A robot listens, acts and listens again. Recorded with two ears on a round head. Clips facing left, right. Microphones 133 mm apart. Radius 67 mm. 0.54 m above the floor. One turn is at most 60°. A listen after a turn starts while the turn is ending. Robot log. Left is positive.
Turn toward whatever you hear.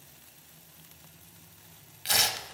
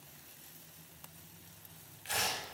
cmd yaw +60
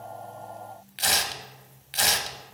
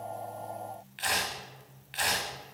note: So it is at 45° left.
cmd yaw +45
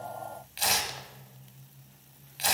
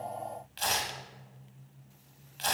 note: The tearing paper is now 10° left.
cmd yaw +10
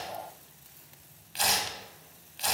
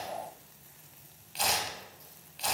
end: Found it: tearing paper, straight ahead.